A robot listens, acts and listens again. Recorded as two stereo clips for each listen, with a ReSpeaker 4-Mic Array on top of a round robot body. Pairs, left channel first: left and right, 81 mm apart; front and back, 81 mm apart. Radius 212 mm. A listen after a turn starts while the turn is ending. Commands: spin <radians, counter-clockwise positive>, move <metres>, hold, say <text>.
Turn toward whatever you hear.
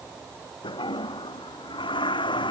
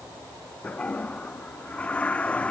spin 1.31
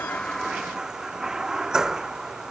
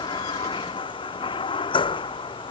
say Found it: a toilet flushing, straight ahead.